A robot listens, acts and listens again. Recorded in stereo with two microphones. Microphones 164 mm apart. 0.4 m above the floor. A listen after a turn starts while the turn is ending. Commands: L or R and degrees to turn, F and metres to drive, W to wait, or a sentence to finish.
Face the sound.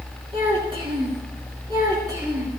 R25
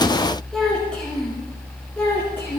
L15
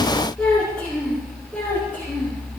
L10
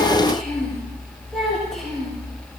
Facing the child speaking.